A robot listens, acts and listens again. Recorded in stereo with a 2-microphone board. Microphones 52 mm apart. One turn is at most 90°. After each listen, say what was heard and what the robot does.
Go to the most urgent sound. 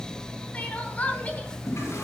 The crying: about 30° left or 150° left. Turn 30° left.
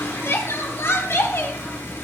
So it is at 120° left. Turn 90° left.
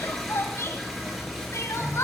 The crying is now 70° left. Turn 70° left.
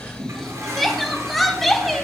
Drive 1.0 m forward.
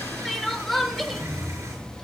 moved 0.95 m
Drive 1.0 m forward.
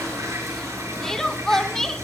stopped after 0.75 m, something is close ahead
The crying is now 10° left. Turn 10° left.
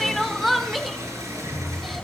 Arrived at the crying, straight ahead.